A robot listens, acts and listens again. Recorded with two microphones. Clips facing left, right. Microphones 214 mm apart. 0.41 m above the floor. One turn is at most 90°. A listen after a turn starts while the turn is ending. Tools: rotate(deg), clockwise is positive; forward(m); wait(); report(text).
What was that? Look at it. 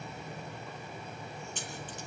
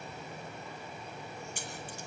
rotate(30)
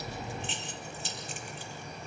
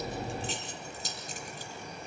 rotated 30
rotate(90)
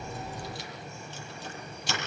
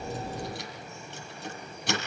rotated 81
rotate(60)
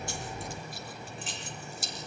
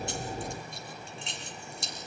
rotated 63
report("Facing the keys jangling, over 4 m away.")